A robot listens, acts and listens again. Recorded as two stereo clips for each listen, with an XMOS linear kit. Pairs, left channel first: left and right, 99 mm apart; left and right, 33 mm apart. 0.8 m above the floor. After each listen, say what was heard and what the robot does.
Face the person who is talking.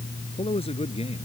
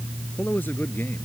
Turn 90° left.
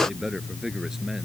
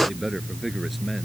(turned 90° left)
Facing the man speaking.